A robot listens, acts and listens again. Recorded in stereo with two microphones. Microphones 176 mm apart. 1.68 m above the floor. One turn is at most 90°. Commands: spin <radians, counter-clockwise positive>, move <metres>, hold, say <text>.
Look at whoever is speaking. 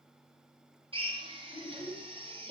spin 0.26
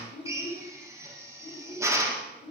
spin 1.57
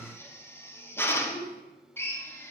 spin 1.57
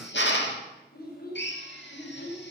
spin 1.05
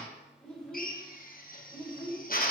say Found it: a child speaking, straight ahead.